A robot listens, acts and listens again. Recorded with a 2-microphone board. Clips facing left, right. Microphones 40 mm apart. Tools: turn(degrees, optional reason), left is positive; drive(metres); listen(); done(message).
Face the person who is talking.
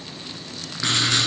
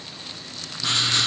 listen()
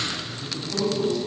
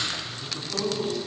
turn(degrees=-30)
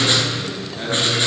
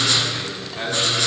turn(degrees=-140, reason="So it is at 140° right.")
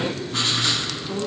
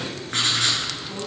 turn(degrees=10, reason="The man speaking is now 10° left.")
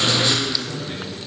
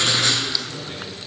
done("Found it: a man speaking, straight ahead.")